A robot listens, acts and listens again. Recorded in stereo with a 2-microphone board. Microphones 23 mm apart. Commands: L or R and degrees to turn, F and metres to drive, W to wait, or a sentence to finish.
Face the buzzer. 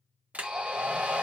R45
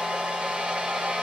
W
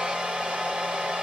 W
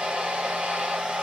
I heard a buzzer, but can't make it out now. It was about straight ahead or 90° right.